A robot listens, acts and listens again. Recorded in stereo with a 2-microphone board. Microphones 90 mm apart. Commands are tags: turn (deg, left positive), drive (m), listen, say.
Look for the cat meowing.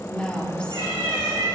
<turn deg="-90"/>
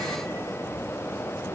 <listen/>
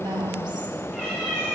<turn deg="10"/>
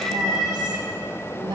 <say>Found it: a cat meowing, straight ahead.</say>